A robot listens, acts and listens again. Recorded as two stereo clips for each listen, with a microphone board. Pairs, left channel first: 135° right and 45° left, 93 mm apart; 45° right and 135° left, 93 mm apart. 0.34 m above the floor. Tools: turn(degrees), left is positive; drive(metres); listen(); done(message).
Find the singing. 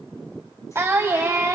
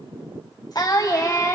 done("Found it: singing, straight ahead.")